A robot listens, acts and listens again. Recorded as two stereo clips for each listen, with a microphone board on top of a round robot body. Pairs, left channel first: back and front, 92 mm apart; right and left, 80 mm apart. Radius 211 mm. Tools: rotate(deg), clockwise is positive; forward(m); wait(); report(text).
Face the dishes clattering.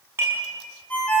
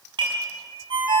rotate(-65)
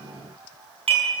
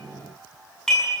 report("Facing the dishes clattering, over 4 m away.")